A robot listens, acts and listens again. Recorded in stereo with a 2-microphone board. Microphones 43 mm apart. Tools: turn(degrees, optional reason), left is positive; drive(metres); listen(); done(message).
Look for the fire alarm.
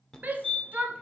turn(degrees=30)
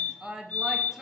turn(degrees=140, reason="So it is at 140° left.")
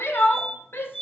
turn(degrees=15, reason="The fire alarm is now 15° left.")
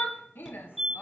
done("Facing the fire alarm, 1 to 2 m away.")